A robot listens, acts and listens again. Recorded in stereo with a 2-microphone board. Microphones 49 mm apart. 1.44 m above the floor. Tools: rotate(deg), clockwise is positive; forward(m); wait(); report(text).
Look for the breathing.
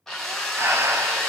rotate(55)
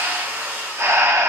rotate(65)
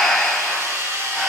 report("Found it: breathing, straight ahead, under 1 m away.")